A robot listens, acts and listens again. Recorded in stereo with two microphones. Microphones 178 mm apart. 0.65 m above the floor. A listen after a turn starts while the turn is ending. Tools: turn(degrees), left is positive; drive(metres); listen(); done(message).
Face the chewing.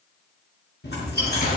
turn(degrees=70)
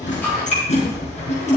turn(degrees=40)
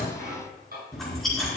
done("Facing the chewing, over 4 m away.")